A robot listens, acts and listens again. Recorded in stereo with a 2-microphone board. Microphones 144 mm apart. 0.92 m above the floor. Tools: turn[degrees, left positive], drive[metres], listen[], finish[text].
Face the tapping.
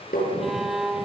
Thought: The tapping: about 70° left or 110° left.
Action: turn[70]
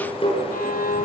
Thought: So it is at 40° left.
Action: turn[40]
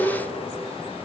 Action: listen[]
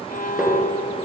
Action: listen[]
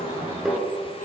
Action: finish[Facing the tapping.]